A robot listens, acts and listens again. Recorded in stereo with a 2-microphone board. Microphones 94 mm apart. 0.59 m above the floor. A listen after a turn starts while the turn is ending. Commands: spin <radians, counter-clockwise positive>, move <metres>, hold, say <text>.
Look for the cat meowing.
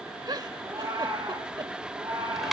spin -0.87
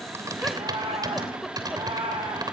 spin -1.22
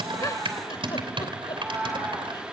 spin -0.26
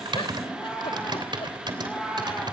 say Found it: a cat meowing, straight ahead.